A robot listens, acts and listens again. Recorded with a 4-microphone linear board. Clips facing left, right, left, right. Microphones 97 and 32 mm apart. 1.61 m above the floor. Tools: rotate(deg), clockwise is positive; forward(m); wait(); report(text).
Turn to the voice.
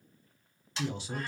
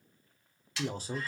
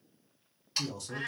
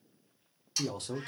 rotate(40)
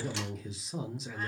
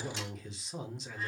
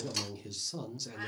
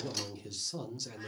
report("Found it: a man speaking, straight ahead.")